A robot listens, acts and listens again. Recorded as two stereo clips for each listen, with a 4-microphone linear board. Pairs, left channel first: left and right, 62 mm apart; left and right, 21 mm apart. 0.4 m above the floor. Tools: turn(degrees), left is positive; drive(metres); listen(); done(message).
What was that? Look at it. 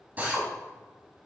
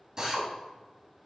turn(degrees=-30)
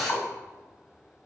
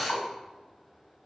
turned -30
done("Found it: a drill, straight ahead.")